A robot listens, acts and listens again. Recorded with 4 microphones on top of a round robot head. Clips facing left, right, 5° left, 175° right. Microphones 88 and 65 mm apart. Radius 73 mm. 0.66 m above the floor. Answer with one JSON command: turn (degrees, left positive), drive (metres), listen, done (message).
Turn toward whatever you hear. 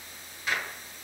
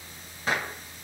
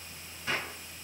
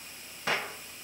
{"turn": -150}
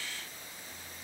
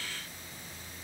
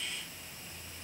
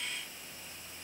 {"done": "Facing where the gunshot came from. I can't hear it now."}